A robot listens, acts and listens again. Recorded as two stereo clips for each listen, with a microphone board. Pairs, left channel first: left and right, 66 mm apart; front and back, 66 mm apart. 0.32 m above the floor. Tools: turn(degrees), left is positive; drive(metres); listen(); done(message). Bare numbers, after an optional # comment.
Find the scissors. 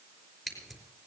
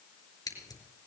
done("Found it: scissors, straight ahead.")